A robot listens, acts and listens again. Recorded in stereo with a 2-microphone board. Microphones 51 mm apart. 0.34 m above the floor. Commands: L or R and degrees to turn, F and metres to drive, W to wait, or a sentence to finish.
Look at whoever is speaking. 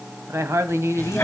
R60
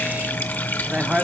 R25
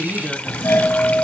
R10
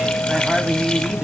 W
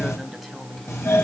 W
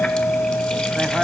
Facing where the woman speaking came from. I can't hear it now.